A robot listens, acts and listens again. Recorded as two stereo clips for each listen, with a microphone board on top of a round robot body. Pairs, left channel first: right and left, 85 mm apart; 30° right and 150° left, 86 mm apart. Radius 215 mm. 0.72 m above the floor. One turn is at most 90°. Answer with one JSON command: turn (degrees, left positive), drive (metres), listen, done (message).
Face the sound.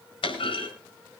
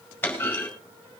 {"turn": -90}
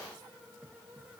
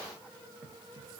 {"turn": -10}
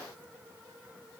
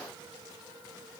{"done": "I heard a clunk from this way, but can't make it out now."}